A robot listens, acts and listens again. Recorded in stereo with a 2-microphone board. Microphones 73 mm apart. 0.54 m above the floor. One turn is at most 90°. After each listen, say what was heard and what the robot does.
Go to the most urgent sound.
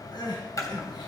The crying: about 70° left or 110° left. Turn 70° left.
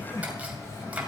So it is at 40° left. Turn 40° left.
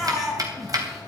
Drive 1.0 m forward.
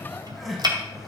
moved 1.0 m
Drive 1.0 m forward.
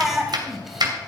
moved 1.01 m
Drive 1.0 m forward.
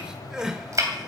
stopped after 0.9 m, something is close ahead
The crying is now 10° right. Turn 10° right.
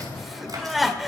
Arrived at the crying, straight ahead.